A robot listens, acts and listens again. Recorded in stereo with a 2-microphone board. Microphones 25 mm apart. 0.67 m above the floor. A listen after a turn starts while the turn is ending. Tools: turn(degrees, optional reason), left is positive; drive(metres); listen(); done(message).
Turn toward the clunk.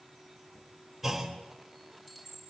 turn(degrees=-30)
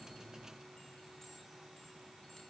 listen()
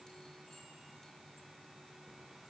done("I heard a clunk, but can't make it out now. It was about 20° left or 140° right.")